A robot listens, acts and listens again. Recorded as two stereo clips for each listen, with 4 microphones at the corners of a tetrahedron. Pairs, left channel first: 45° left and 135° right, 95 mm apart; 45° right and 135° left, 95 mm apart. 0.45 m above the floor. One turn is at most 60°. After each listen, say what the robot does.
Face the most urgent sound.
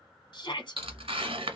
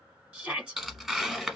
Turn 60° left.
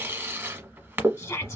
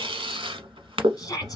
Facing the shout.